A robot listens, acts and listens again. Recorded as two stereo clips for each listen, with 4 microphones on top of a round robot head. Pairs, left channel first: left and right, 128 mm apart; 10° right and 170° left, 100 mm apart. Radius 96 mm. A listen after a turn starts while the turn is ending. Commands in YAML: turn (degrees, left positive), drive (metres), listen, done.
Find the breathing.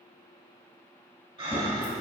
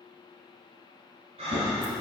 turn: -140
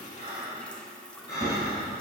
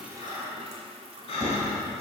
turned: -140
turn: 15
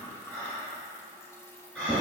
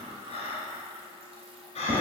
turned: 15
done: "Found it: breathing, straight ahead."